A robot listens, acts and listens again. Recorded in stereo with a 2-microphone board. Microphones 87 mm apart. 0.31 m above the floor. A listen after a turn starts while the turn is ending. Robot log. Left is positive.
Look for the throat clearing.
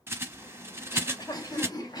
note: The throat clearing: about 45° left or 135° left.
cmd yaw +45
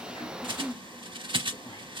note: So it is at 75° left.
cmd yaw +75
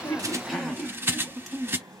end: Facing the throat clearing, 1 to 2 m away.